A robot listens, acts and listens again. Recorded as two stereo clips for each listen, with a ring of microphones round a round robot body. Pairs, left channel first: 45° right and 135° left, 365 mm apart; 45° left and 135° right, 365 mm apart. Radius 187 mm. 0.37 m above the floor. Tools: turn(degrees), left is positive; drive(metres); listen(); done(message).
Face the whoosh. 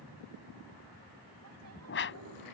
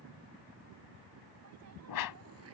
turn(degrees=15)
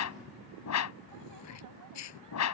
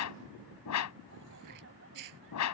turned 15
done("Found it: a whoosh, straight ahead.")